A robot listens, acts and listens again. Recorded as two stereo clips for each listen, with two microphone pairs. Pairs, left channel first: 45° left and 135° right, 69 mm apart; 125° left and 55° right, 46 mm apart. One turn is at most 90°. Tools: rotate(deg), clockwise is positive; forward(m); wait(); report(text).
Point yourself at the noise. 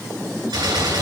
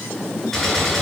rotate(90)
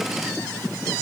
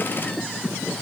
rotate(60)
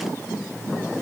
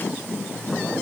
report("I heard a gunshot from this way, but can't make it out now.")